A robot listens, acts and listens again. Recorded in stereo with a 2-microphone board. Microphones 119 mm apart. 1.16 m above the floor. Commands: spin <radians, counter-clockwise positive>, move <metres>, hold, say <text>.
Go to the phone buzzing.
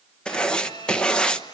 spin 0.70
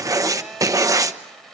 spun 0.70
move 1.0
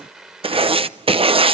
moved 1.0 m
move 1.0
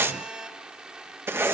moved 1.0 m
move 1.0
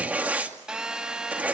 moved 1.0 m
move 1.0
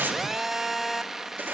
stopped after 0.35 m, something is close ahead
say I am next to the phone buzzing.